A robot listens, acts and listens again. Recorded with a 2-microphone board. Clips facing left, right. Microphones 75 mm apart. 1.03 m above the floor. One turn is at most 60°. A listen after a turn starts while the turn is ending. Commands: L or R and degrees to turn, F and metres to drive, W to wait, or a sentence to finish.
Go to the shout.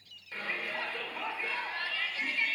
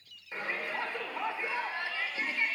R20
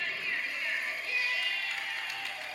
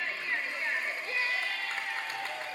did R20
R60
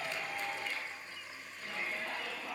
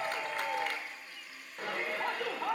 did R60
R60
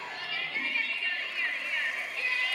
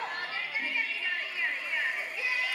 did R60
R15
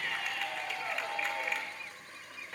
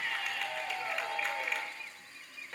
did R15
F1.0
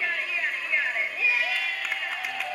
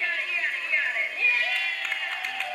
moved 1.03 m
F1.0
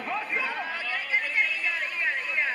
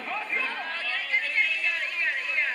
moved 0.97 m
L10
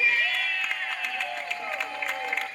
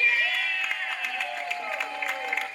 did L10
F1.0
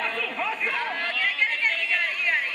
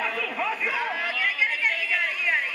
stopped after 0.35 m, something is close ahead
I am next to the shout.